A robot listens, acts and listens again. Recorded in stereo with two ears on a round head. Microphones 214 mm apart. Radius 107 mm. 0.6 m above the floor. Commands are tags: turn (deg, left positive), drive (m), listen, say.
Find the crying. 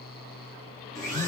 <listen/>
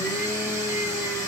<listen/>
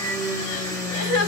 <turn deg="90"/>
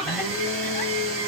<listen/>
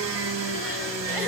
<listen/>
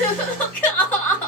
<say>Found it: crying, straight ahead, 1 to 2 m away.</say>